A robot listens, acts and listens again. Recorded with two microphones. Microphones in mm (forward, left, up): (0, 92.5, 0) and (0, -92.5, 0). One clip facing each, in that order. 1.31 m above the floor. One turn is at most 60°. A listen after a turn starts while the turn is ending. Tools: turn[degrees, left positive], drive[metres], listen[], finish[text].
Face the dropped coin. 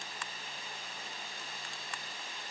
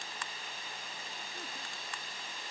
Action: listen[]
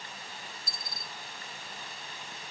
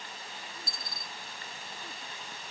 Thought: The dropped coin: about 45° left or 135° left.
Action: turn[45]
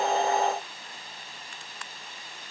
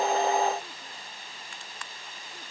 Action: listen[]
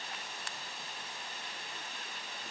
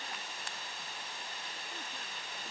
Action: finish[I heard a dropped coin, but can't make it out now. It was about straight ahead or 90° left.]